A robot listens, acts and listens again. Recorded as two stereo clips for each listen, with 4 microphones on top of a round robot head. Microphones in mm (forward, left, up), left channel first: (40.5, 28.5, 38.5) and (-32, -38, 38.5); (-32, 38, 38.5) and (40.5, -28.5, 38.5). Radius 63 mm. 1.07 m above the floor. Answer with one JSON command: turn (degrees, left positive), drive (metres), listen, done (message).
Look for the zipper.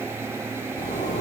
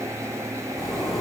{"turn": 50}
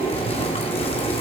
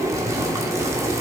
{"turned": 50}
{"turn": 15}
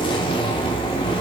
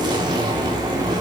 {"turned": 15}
{"done": "Facing the zipper, 2 to 4 m away."}